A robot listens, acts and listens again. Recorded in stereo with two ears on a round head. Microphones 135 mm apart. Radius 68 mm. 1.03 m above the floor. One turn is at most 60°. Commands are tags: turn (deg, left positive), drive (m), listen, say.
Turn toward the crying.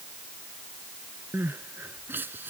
<turn deg="-30"/>
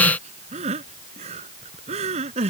<turn deg="-60"/>
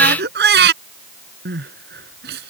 <turn deg="-60"/>
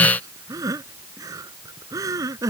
<turn deg="-20"/>
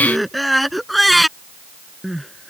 <say>Found it: crying, straight ahead.</say>